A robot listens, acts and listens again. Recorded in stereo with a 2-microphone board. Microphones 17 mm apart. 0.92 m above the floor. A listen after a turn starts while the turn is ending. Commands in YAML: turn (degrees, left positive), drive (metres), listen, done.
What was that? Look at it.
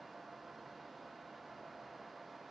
listen: true
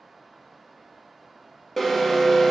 turn: 30
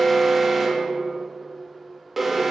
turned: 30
turn: -30
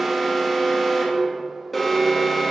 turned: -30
done: "Found it: an alarm, straight ahead, 2 to 4 m away."